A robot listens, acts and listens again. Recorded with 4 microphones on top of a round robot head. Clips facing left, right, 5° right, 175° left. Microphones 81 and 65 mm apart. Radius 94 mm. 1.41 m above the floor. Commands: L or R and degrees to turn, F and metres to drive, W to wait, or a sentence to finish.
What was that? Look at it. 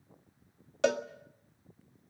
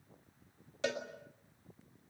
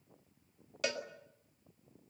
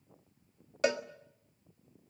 L115
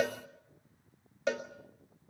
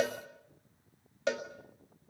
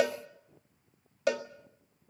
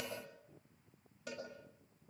Found it: a cowbell, straight ahead.